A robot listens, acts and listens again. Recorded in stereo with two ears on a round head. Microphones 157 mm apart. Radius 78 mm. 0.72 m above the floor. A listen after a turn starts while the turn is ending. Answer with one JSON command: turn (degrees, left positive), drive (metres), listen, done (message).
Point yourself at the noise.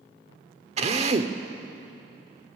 {"turn": -40}
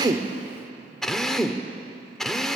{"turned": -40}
{"done": "Found it: a drill, straight ahead."}